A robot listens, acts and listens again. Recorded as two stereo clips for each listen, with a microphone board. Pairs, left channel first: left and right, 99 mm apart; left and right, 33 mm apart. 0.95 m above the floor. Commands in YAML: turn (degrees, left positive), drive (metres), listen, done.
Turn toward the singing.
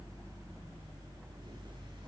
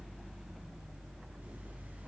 listen: true
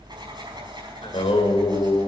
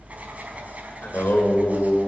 turn: 90
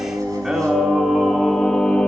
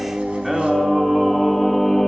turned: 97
turn: 10
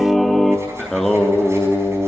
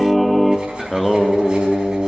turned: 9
done: "Facing the singing, 1 to 2 m away."